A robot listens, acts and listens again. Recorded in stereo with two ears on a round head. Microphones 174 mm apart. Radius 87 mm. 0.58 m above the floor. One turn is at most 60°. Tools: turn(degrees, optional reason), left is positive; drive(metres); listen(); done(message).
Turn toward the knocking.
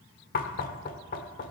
turn(degrees=45, reason="The knocking: about 45° left or 135° left.")
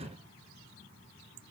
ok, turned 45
listen()
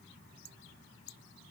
listen()
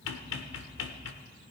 turn(degrees=60, reason="So it is at 85° left.")
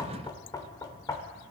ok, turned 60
turn(degrees=20, reason="The knocking is now 20° left.")
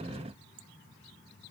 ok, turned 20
listen()
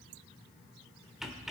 done("Facing the knocking.")